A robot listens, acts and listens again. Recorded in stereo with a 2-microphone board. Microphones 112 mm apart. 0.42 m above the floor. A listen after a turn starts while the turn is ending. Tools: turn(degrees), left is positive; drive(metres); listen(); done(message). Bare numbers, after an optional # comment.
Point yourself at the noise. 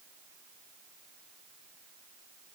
listen()
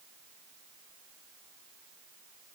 listen()
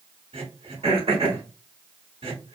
# The throat clearing: about 55° right or 125° right.
turn(-55)
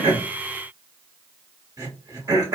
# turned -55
# So it is at 40° right.
turn(-40)
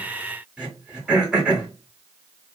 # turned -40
# The throat clearing is now 10° right.
turn(-10)
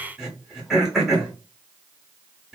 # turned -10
done("Found it: throat clearing, straight ahead, 1 to 2 m away.")